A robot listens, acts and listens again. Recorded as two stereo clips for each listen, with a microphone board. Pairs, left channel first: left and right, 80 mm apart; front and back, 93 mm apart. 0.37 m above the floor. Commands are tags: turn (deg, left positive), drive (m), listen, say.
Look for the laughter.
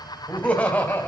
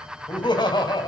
<turn deg="25"/>
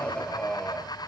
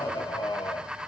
<turn deg="15"/>
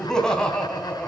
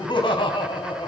<turn deg="15"/>
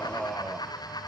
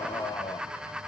<say>Found it: laughter, straight ahead, 2 to 4 m away.</say>